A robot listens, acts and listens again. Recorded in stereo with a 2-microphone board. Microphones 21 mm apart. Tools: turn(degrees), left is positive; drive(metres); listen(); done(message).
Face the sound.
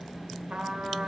turn(degrees=-65)
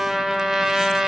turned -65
turn(degrees=-30)
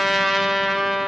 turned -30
turn(degrees=-10)
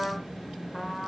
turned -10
done("Found it: a trumpet, straight ahead.")